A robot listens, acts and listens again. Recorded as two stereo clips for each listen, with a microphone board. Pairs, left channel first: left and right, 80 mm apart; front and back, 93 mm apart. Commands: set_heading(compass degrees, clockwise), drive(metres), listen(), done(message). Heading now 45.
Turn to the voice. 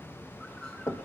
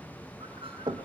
listen()
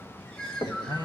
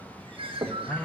set_heading(330)
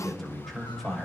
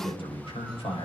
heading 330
done("Found it: a man speaking, straight ahead, over 4 m away.")